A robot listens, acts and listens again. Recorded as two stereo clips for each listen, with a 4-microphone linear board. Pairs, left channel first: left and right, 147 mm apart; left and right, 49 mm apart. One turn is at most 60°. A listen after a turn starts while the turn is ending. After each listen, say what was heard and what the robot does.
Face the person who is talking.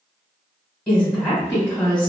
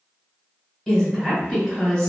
Turn 30° left.
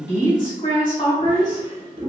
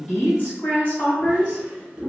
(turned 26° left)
So it is at 145° left. Turn 60° left.
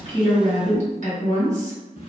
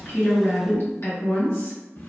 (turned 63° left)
The woman speaking is now 80° left. Turn 60° left.
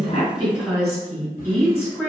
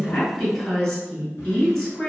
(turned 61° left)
The woman speaking is now 20° left. Turn 20° left.
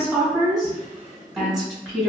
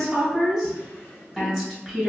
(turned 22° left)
Found it: a woman speaking, straight ahead, 1 to 2 m away.